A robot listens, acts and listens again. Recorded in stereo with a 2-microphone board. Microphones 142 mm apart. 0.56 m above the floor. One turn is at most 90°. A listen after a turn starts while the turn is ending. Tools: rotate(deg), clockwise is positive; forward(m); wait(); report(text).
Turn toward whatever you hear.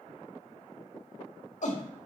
rotate(-55)
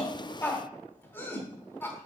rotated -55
rotate(-15)
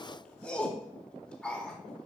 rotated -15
rotate(-10)
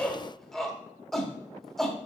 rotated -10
report("Found it: a shout, straight ahead, 1 to 2 m away.")